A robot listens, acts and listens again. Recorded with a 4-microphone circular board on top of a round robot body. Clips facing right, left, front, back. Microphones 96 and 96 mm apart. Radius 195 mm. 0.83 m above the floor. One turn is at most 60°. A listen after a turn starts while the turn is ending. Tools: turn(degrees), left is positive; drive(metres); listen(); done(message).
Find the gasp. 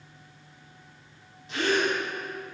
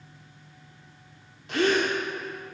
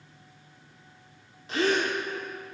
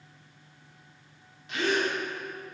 turn(degrees=55)
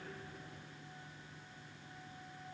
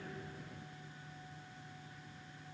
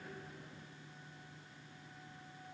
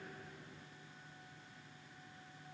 done("I heard a gasp from this way, but can't make it out now.")